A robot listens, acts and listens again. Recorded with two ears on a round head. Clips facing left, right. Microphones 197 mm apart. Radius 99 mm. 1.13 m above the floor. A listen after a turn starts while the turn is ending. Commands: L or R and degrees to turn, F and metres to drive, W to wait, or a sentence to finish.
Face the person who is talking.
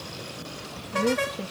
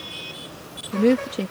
R65
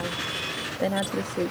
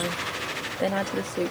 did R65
Facing the woman speaking.